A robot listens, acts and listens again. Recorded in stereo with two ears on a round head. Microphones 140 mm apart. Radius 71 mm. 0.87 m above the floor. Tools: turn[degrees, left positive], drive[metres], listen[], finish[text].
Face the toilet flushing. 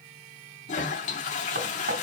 Thought: The toilet flushing: about 50° left or 130° left.
Action: turn[50]
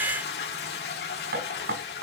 Thought: So it is at 80° left.
Action: turn[80]
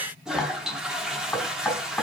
Action: finish[Facing the toilet flushing.]